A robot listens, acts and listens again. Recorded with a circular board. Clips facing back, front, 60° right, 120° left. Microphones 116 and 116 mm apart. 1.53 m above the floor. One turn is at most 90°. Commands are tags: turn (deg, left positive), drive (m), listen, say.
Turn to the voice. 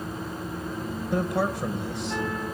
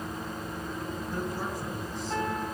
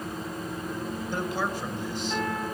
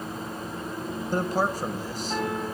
<turn deg="90"/>
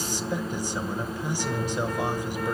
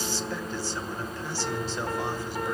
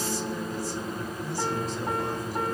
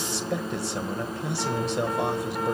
<turn deg="90"/>
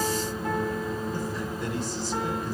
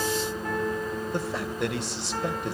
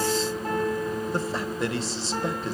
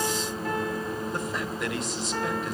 <say>Facing the man speaking.</say>